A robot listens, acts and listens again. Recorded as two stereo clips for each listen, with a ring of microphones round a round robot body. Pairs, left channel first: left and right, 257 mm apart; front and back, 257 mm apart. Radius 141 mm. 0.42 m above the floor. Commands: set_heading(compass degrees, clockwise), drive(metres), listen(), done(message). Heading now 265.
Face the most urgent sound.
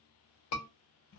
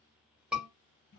set_heading(170)
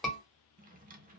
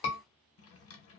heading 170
done("Facing the scream.")